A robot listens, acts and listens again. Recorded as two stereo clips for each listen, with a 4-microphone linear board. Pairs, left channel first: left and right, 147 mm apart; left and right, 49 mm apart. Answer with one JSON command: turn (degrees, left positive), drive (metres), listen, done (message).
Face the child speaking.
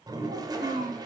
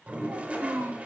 {"turn": -90}
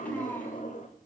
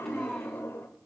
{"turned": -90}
{"turn": 15}
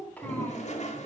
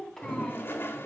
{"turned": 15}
{"turn": 10}
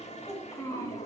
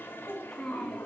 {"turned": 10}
{"turn": 20}
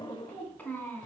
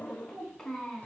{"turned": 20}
{"turn": 10}
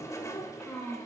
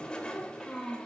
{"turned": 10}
{"done": "Facing the child speaking."}